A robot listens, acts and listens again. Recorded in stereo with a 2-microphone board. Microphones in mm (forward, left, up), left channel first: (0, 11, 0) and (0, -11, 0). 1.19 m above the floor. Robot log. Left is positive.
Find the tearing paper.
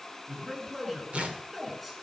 note: The tearing paper: about 70° right or 110° right.
cmd yaw -70
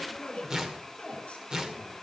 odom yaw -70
note: So it is at 35° right.
cmd yaw -35
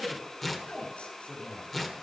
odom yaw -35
note: The tearing paper is now 10° left.
cmd yaw +10
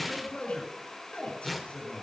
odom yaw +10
end: Found it: tearing paper, straight ahead, 2 to 4 m away.